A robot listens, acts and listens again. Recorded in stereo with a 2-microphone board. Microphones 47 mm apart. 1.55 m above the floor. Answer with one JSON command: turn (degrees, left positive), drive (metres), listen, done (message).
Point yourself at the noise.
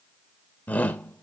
{"turn": 35}
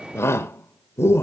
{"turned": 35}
{"turn": 110}
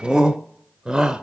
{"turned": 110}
{"turn": -20}
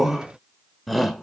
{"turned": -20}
{"done": "Found it: a shout, straight ahead, under 1 m away."}